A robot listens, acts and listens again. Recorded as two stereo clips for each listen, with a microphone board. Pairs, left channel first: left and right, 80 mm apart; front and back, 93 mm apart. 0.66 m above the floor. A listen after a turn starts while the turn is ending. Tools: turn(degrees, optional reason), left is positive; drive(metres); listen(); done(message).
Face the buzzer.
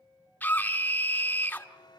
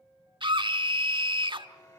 turn(degrees=55, reason="The buzzer: 55° left.")
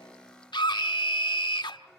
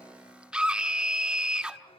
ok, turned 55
listen()
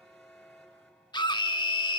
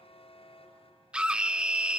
done("Facing the buzzer, 2 to 4 m away.")